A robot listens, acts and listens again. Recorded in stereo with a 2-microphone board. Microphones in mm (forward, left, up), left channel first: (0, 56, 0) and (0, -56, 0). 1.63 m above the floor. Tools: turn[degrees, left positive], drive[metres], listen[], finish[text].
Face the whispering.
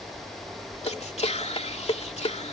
Action: turn[90]
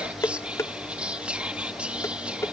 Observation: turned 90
Thought: So it is at 10° right.
Action: turn[-10]
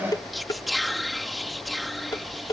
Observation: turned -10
Action: finish[Found it: whispering, straight ahead.]